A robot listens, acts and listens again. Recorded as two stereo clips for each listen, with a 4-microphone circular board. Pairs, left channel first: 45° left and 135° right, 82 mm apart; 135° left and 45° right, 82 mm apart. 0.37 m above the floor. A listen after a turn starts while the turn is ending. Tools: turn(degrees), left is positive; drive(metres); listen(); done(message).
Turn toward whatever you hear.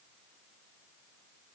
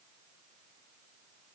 listen()
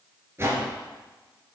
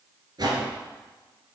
turn(degrees=-75)
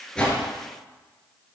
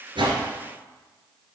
listen()
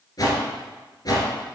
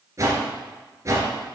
done("Found it: a whoosh, straight ahead.")